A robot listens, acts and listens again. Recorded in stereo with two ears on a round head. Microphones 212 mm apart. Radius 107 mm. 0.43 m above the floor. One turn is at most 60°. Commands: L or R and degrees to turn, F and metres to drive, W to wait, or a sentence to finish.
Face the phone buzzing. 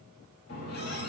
W
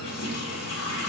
W
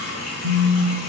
R60
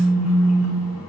R30
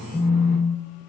Found it: a phone buzzing, straight ahead.